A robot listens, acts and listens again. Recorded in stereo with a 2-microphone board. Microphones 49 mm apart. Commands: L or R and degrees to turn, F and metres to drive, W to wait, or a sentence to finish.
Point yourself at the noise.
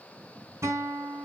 R90
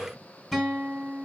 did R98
Facing the guitar, 2 to 4 m away.